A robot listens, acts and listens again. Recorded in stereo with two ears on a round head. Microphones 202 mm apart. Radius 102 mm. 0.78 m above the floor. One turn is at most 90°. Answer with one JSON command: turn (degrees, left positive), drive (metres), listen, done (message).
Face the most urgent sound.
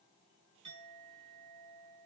{"listen": true}
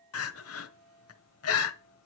{"turn": 65}
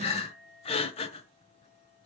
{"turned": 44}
{"turn": 25}
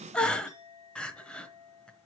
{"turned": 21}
{"done": "Facing the crying, 1 to 2 m away."}